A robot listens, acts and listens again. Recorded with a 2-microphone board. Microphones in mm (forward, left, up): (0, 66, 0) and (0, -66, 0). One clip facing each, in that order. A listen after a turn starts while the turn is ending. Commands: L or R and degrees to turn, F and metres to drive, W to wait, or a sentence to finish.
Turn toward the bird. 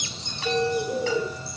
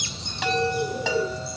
L30
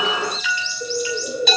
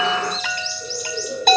L135
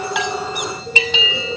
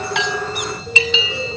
L45
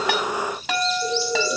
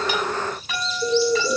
R20
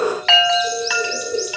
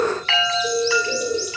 R10
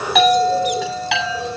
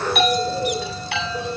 Found it: a bird, straight ahead, over 4 m away.